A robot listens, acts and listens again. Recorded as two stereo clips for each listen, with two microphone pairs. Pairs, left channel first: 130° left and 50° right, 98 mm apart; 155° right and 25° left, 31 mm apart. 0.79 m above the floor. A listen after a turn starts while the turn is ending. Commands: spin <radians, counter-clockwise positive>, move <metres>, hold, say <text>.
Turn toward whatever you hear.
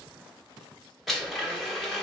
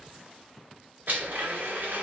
spin 0.70
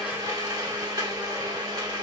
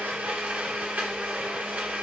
say Facing the blender.